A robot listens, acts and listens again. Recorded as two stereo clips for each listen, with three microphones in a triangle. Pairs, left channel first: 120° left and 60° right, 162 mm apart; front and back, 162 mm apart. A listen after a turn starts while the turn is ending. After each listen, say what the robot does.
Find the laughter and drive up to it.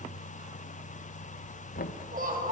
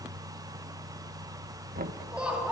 Turn 95° right.
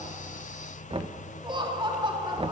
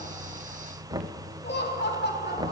Drive 1.0 m forward.
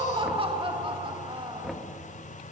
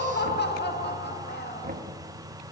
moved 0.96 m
Drive 1.0 m forward.
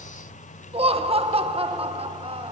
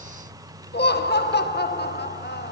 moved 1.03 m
Drive 1.0 m forward.
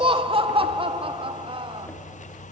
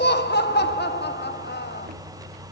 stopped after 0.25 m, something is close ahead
Arrived at the laughter, straight ahead.